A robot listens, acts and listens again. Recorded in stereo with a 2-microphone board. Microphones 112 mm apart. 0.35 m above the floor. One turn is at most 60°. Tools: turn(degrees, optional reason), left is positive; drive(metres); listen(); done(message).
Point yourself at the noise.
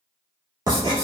turn(degrees=-40, reason="The writing: about 40° right or 140° right.")
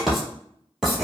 done("Facing the writing, 1 to 2 m away.")